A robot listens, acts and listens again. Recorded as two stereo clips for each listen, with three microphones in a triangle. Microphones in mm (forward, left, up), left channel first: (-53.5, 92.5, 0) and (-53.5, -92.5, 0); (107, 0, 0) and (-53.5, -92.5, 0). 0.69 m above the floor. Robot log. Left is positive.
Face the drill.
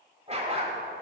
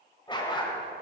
cmd idle
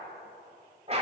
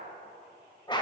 cmd idle
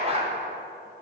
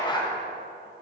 end: I can't make out a drill to turn to.